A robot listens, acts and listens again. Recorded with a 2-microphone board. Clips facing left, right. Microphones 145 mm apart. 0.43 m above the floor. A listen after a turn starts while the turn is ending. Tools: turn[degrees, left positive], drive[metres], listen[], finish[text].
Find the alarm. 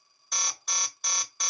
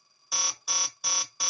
Action: turn[-30]
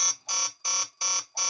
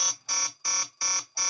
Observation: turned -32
Thought: So it is at 25° left.
Action: turn[25]
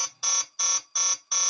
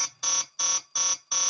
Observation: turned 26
Action: finish[Facing the alarm, 1 to 2 m away.]